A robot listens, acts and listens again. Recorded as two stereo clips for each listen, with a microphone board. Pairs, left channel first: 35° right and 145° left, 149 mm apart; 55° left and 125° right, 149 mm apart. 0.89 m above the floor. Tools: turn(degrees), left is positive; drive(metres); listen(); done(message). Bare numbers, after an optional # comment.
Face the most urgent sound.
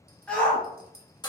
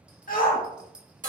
# The shout: 50° left.
turn(50)
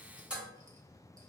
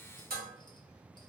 listen()
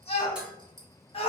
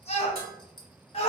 # The shout is now 15° left.
turn(15)
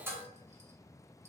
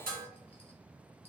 listen()
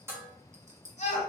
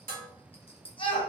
done("Facing the shout.")